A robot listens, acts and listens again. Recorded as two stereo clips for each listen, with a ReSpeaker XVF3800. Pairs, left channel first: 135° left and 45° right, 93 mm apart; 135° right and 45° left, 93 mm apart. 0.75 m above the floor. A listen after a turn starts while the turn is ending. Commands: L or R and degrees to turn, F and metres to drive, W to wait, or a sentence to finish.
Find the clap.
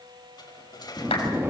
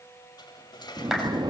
L130
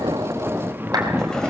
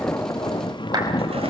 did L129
W
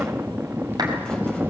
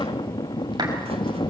W
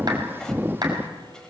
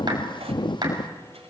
Found it: a clap, straight ahead.